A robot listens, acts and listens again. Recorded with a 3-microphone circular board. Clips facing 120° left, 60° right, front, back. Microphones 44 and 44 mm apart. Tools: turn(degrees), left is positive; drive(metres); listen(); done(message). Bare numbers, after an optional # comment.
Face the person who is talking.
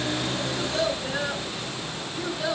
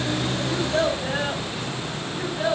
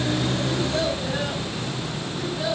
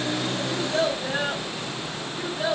# The child speaking: 110° right.
turn(-110)
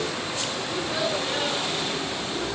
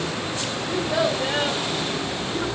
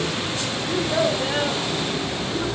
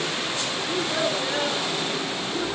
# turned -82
# The child speaking is now 20° right.
turn(-20)
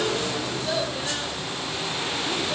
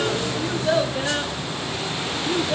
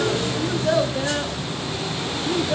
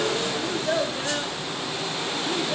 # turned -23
done("Found it: a child speaking, straight ahead, over 4 m away.")